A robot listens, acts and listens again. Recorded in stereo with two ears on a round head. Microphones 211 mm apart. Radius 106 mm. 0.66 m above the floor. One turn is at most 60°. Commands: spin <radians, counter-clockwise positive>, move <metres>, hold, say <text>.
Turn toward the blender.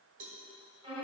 hold
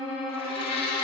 spin 0.44
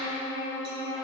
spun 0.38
hold
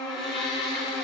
say Found it: a blender, straight ahead.